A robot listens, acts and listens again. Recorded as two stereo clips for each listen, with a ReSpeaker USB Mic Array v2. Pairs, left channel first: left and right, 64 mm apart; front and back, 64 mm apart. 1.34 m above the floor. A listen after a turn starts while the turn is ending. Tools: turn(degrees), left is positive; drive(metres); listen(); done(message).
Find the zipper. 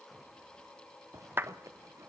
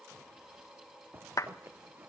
turn(degrees=-125)
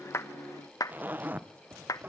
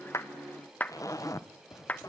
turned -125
turn(degrees=-30)
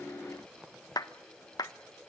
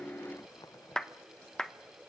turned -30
turn(degrees=-10)
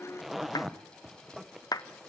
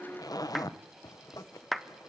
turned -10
done("Found it: a zipper, straight ahead.")